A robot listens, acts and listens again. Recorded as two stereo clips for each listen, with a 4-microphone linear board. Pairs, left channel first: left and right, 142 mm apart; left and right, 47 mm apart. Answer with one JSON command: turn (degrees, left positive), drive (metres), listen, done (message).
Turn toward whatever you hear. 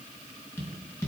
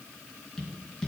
{"turn": 15}
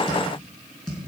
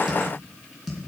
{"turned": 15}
{"done": "Found it: tapping, straight ahead."}